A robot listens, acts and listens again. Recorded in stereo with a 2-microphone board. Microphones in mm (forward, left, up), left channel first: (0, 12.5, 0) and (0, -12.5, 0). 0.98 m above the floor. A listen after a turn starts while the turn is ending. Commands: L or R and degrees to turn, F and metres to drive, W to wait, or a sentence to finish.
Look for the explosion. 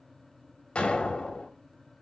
L50
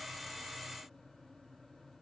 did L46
W
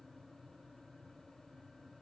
I heard an explosion, but can't make it out now. It was about 5° left or 80° left.